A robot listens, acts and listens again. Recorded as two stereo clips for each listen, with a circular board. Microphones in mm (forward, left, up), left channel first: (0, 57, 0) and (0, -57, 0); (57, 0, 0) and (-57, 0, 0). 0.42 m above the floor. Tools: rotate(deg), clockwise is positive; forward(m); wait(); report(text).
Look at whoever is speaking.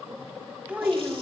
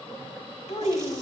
rotate(20)
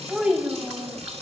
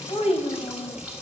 rotate(20)
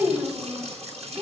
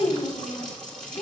rotate(30)
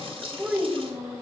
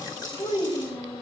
rotate(20)
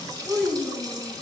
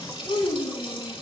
report("Facing the child speaking.")